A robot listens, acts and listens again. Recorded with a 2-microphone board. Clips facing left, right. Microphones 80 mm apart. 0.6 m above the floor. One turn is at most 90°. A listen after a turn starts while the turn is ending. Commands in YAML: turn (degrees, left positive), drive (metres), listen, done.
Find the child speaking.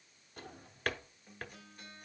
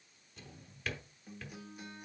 listen: true
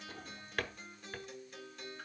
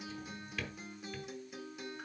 listen: true
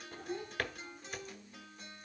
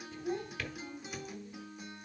turn: -40
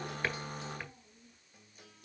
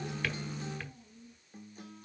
turn: 10
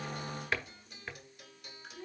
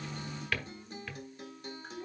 done: "Found it: a child speaking, straight ahead, 2 to 4 m away."